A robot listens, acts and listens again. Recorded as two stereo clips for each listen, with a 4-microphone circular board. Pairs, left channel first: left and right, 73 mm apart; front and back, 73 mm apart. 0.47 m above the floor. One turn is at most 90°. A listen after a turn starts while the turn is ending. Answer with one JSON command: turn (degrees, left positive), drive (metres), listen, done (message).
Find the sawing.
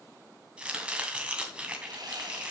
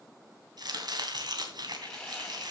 {"turn": -80}
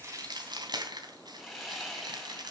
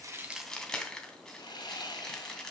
{"done": "Facing the sawing, 2 to 4 m away."}